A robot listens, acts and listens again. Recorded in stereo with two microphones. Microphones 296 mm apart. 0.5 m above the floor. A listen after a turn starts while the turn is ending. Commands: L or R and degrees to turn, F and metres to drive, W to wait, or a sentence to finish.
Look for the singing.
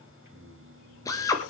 R50
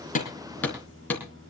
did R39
R35
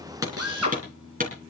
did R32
R10
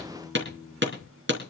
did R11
Facing the singing.